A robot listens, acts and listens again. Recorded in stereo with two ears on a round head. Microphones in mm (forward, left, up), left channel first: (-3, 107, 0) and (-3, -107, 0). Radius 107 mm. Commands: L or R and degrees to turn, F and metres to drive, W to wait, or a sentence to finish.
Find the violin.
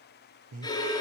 L15
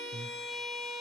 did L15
Facing the violin.